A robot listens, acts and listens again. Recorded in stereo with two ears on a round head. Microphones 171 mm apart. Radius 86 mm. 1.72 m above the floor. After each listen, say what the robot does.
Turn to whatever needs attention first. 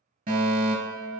Turn 45° right.
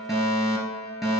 Facing the fire alarm, 2 to 4 m away.